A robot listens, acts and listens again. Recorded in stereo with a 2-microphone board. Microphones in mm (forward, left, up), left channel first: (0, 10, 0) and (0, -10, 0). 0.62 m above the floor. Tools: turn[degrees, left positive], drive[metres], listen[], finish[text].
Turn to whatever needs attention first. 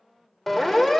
Action: turn[30]
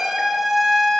Thought: So it is at 20° right.
Action: turn[-20]
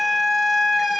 Action: finish[Found it: a siren, straight ahead.]